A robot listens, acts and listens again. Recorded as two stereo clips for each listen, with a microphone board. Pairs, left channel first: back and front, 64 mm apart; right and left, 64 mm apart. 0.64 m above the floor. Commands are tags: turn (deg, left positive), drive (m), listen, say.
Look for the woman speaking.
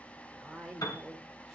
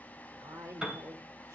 <turn deg="85"/>
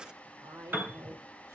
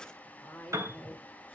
<turn deg="-25"/>
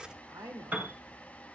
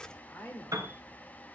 <turn deg="-15"/>
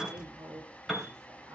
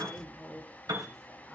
<say>Facing the woman speaking.</say>